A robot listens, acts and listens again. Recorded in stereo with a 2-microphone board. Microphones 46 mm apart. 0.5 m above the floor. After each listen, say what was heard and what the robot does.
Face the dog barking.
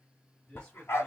The dog barking: about 65° left or 115° left. Turn 65° left.
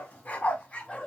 So it is at 25° left. Turn 25° left.
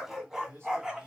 The dog barking is now 10° right. Turn 10° right.
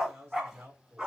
The dog barking is now 15° right. Turn 15° right.
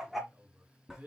Facing the dog barking, 1 to 2 m away.